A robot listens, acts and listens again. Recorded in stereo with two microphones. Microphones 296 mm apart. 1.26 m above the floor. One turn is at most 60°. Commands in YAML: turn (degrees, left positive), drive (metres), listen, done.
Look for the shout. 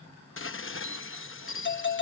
listen: true
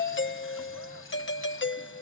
listen: true
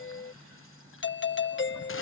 done: "I can't make out a shout, only a doorbell and dishes clattering."